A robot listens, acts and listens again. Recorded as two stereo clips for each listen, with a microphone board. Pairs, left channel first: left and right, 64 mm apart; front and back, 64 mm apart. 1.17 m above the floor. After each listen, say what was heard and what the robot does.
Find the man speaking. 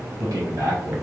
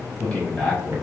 The man speaking: 85° right. Turn 85° right.
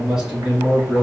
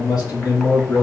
The man speaking is now 20° right. Turn 20° right.
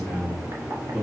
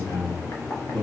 Facing the man speaking, 2 to 4 m away.